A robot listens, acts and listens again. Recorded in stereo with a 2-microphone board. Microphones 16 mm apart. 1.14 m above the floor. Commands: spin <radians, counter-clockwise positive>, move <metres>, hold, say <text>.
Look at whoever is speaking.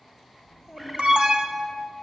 spin -0.52
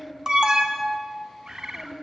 spin 0.35
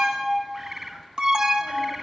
hold
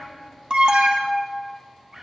hold
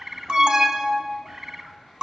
say Facing where the child speaking came from. I can't hear it now.